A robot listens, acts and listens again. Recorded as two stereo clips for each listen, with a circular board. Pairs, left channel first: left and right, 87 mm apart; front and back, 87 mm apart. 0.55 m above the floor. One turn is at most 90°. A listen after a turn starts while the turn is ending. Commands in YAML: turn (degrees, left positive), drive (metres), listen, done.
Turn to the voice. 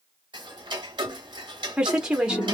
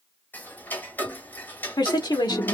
turn: -10
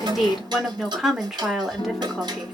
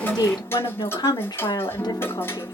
done: "Found it: a woman speaking, straight ahead, 1 to 2 m away."